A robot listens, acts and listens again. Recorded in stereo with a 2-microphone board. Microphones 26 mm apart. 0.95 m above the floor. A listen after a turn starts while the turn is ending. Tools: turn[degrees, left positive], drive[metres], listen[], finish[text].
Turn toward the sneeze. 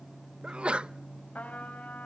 Thought: The sneeze: about 40° right or 140° right.
Action: turn[-40]
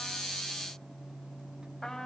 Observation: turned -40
Action: listen[]
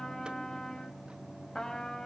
Action: finish[I heard a sneeze, but can't make it out now. It was about straight ahead or 100° right.]